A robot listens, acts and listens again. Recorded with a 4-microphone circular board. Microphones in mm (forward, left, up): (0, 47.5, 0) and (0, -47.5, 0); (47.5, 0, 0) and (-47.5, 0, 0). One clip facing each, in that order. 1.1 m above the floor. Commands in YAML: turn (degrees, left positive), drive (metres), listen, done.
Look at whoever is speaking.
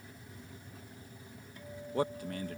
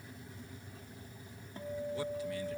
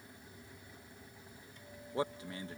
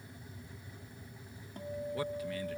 turn: 60
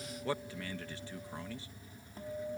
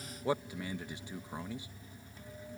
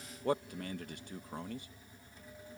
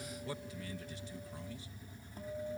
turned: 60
turn: -20
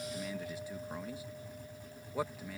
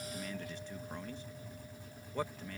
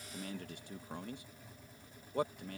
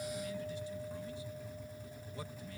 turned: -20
turn: 10
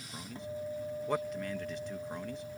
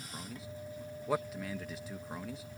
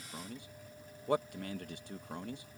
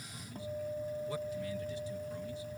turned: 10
done: "Facing the man speaking."